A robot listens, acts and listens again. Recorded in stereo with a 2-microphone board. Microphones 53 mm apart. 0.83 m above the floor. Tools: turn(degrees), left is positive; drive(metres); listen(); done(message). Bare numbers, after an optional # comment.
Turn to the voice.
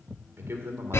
# The man speaking: about 55° right or 125° right.
turn(-55)
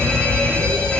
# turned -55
listen()
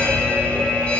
listen()
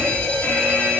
done("I heard a man speaking, but can't make it out now. It was about straight ahead or 70° right.")